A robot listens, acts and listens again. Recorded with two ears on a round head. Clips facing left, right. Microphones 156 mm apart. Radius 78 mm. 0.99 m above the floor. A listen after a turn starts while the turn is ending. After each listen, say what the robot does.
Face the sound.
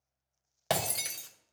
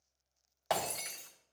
Turn 40° left.
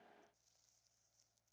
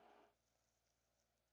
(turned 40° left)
Keep listening.
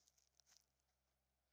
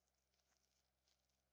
I heard breaking glass, but can't make it out now. It was about straight ahead or 100° left.